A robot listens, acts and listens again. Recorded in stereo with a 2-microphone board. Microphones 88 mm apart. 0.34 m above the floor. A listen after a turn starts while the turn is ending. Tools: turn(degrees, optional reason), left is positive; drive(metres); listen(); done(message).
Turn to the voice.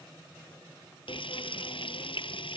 listen()
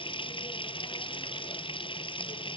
listen()
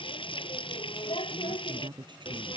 turn(degrees=-65, reason="The woman speaking: about 65° right or 115° right.")
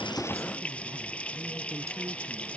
listen()
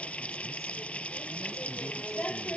listen()
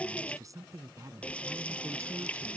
turn(degrees=-40, reason="So it is at 40° right.")
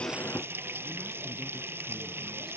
listen()
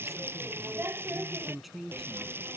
done("Found it: a woman speaking, straight ahead.")